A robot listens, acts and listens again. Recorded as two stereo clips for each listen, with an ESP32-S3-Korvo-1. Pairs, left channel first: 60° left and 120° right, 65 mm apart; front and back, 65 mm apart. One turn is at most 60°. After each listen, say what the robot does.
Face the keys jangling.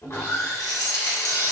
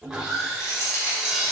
Turn 45° left.
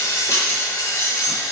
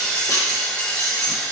Turn 30° left.
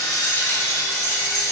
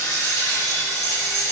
Turn 10° left.
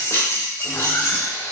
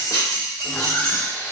Turn 10° left.
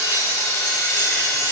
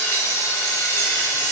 Keep listening.
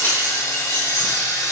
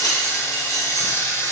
Facing the keys jangling.